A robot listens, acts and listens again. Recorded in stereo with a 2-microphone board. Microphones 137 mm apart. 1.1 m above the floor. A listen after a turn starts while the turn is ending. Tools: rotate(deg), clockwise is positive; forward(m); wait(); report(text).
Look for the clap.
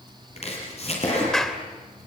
rotate(-30)
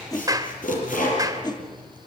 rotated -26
rotate(25)
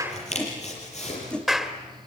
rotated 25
report("Facing the clap.")